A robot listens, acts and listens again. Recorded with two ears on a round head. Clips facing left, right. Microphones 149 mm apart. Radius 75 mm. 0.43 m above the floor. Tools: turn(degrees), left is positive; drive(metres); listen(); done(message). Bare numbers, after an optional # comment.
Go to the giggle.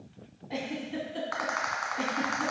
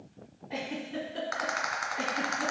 # The giggle: about 45° left or 135° left.
turn(45)
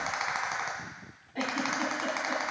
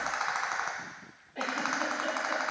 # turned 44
# So it is at 90° left.
turn(90)
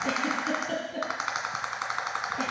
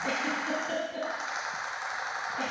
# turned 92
drive(1.0)
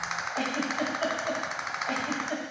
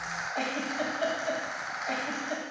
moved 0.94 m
# The giggle is now 10° right.
turn(-10)
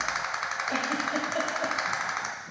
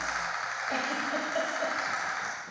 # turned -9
listen()
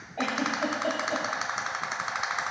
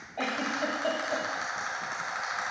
drive(1.0)
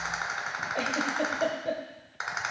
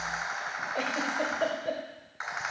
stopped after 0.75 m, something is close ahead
done("I am next to the giggle.")